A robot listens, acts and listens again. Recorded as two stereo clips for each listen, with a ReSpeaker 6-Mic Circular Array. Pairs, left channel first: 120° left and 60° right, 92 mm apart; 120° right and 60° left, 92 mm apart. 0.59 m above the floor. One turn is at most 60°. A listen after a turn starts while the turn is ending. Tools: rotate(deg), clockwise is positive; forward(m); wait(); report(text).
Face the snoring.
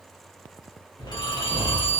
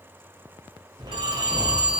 rotate(-60)
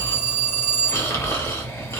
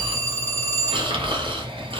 rotate(-60)
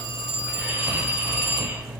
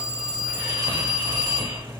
rotate(-15)
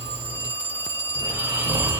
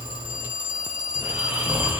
report("Facing the snoring, under 1 m away.")